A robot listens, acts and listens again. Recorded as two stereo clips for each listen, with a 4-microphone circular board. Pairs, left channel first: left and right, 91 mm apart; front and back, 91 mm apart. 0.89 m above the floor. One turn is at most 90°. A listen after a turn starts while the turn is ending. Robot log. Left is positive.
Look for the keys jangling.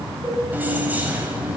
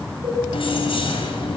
note: The keys jangling: 15° right.
cmd yaw -15
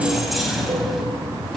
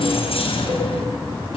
end: Facing the keys jangling.